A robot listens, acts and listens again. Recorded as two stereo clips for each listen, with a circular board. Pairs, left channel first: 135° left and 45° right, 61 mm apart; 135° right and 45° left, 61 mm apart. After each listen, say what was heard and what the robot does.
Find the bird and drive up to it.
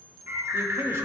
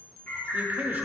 The bird: 80° right. Turn 80° right.
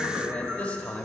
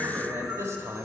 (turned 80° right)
Keep listening.
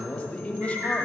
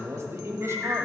Drive 1.0 m forward.
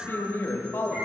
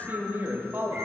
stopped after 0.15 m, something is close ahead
Keep listening.
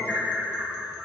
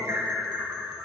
The bird is now 10° left. Turn 10° left.
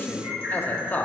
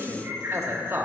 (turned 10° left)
Something is in my way. I am facing the bird but have not reached it.